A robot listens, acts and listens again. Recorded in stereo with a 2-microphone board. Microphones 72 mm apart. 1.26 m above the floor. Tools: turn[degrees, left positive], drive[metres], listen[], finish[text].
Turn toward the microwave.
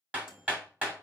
Action: turn[-30]
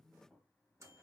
Thought: So it is at 140° right.
Action: turn[-140]
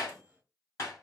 Thought: The microwave is now 20° right.
Action: turn[-20]
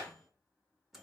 Action: finish[Found it: a microwave, straight ahead.]